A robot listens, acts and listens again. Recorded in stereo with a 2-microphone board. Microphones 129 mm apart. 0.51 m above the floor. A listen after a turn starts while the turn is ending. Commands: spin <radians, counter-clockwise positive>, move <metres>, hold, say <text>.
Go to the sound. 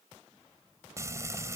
spin -0.44
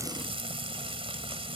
spin -2.27
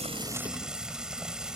move 1.0
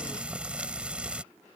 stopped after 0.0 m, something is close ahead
spin -0.17
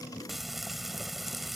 say Blocked. The frying is further on, straight ahead.